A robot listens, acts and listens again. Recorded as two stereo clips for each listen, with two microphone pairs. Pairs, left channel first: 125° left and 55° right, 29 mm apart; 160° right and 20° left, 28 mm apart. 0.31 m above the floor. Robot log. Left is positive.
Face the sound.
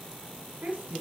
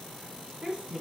note: The woman speaking: 45° right.
cmd yaw -45
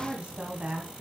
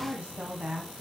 note: The woman speaking is now 20° right.
cmd yaw -20
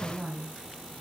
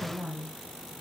note: The woman speaking is now 10° right.
cmd yaw -10
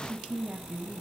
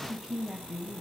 note: The woman speaking is now 30° right.
cmd yaw -30
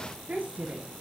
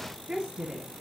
note: The woman speaking is now 25° right.
cmd yaw -25
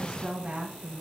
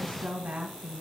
note: The woman speaking is now 10° left.
cmd yaw +10
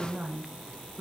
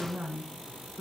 end: Found it: a woman speaking, straight ahead, 2 to 4 m away.